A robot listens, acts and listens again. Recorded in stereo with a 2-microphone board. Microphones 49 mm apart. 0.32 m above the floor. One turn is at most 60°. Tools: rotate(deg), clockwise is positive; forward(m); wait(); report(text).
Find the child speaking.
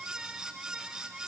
wait()
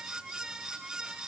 wait()
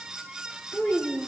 rotate(-40)
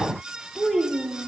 report("Found it: a child speaking, straight ahead.")